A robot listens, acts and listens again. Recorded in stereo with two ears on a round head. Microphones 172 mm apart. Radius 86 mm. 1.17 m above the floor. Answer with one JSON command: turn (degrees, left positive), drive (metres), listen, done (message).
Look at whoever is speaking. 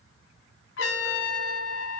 {"listen": true}
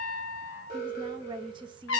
{"turn": -25}
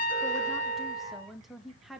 {"done": "Facing the woman speaking, 1 to 2 m away."}